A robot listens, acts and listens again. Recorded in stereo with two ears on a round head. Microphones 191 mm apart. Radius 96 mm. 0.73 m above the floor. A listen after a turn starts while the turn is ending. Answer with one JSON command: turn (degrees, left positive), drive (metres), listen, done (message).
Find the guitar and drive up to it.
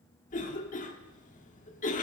{"listen": true}
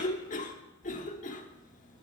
{"listen": true}
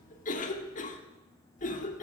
{"done": "I can't make out a guitar to turn to."}